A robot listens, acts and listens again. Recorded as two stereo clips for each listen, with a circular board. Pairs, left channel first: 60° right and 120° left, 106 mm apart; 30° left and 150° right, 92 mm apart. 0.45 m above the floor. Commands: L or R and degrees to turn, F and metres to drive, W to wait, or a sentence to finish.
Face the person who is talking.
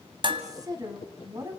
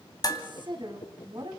L175
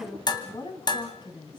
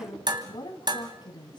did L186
R10
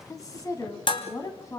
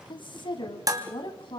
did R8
Found it: a woman speaking, straight ahead, 2 to 4 m away.